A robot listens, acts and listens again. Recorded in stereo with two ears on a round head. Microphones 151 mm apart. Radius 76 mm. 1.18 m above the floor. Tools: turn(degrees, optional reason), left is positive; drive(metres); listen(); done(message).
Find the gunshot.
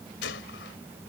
turn(degrees=90)
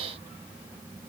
done("Facing where the gunshot came from. I can't hear it now.")